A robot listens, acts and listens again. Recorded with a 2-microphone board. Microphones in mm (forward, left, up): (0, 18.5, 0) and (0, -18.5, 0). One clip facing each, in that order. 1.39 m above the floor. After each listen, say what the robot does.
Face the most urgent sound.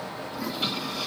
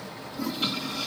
Keep listening.
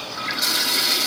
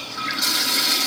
Keep listening.
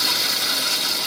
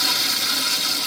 I can't make out anything urgent to turn to.